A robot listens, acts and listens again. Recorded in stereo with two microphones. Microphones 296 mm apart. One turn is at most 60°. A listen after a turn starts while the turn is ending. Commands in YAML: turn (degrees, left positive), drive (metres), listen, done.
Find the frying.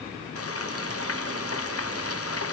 turn: 50
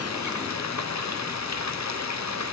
turn: 60
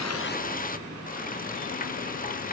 turn: 30
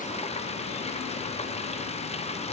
turn: 20
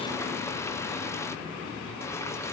listen: true
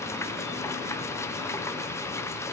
turn: 10
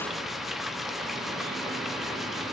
done: "Facing the frying."